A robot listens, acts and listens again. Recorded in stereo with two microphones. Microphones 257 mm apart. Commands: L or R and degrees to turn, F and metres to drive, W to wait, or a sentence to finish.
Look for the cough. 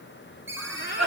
L90
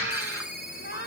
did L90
R10
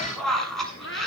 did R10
Facing the cough, over 4 m away.